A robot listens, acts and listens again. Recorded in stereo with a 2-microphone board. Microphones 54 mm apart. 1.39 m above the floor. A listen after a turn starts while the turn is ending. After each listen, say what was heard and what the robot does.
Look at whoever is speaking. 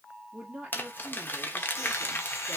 The woman speaking: about 35° right or 145° right. Turn 35° right.
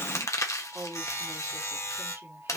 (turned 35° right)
So it is at 110° right. Turn 110° right.
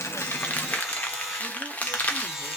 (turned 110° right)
Keep listening.
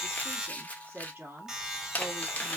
The woman speaking is now 35° right. Turn 35° right.
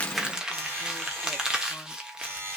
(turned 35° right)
Keep listening.
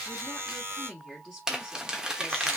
The woman speaking is now 10° left. Turn 10° left.
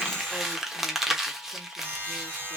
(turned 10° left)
Keep listening.
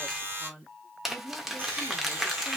Facing the woman speaking, 2 to 4 m away.